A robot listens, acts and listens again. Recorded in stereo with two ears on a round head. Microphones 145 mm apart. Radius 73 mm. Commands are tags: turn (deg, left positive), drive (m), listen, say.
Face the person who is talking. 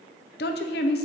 <turn deg="70"/>
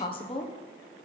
<turn deg="35"/>
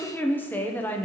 <turn deg="10"/>
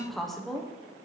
<say>Found it: a woman speaking, straight ahead, under 1 m away.</say>